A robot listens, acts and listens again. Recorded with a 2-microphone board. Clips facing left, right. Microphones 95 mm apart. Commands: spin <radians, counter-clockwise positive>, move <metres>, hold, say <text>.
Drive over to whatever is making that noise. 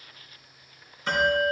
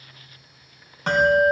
spin -1.22
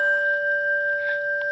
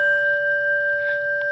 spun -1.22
move 1.0
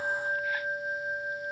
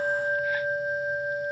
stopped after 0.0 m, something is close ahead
say Something is in my way. I am facing the bell but have not reached it.